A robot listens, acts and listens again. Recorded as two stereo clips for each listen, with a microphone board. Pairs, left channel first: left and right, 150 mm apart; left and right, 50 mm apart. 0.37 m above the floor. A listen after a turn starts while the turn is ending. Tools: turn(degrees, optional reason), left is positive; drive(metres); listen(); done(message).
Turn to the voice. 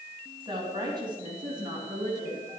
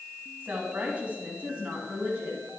turn(degrees=-25, reason="The woman speaking: about 25° right or 155° right.")
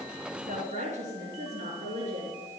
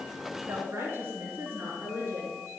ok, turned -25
turn(degrees=-135, reason="So it is at 135° right.")
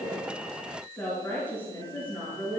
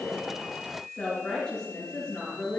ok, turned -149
turn(degrees=15, reason="The woman speaking is now 15° left.")
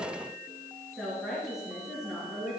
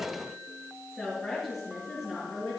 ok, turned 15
done("Facing the woman speaking.")